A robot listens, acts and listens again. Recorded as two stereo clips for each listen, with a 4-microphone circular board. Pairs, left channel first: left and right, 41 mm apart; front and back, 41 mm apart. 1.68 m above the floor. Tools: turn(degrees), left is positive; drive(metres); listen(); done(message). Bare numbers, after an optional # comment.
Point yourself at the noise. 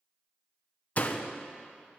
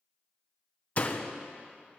# The door slam: 45° left.
turn(45)
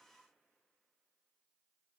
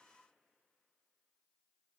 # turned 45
done("I heard a door slam from this way, but can't make it out now.")